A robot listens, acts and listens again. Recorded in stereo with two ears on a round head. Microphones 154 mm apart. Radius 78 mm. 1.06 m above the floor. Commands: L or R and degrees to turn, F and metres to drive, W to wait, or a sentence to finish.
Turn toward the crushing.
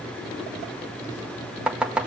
W
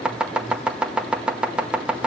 W
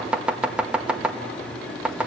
I can't make out crushing, only chopping.